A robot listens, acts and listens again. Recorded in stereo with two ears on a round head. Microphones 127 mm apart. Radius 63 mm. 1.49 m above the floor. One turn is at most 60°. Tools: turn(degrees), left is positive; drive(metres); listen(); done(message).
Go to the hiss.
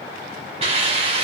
turn(degrees=-45)
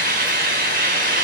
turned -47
turn(degrees=-60)
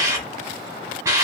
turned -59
turn(degrees=-25)
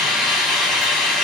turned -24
drive(metres=1.0)
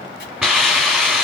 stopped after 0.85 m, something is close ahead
done("I am next to the hiss.")